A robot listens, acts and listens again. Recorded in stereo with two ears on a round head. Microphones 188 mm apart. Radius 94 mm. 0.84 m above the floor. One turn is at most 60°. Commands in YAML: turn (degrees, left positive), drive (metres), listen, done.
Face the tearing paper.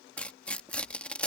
turn: 30
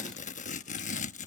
turn: 60
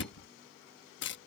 turn: 60
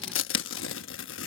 turn: 60
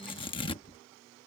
turn: 25
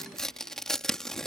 done: "Facing the tearing paper."